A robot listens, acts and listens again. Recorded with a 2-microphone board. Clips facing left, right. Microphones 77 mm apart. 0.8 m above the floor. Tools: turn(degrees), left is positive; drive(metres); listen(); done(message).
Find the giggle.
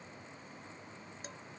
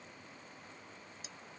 listen()
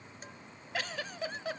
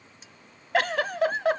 turn(degrees=-70)
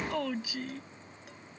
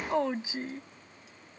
turn(degrees=-30)
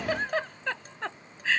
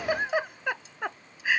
turn(degrees=-15)
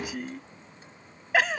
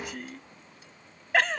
done("Found it: a giggle, straight ahead.")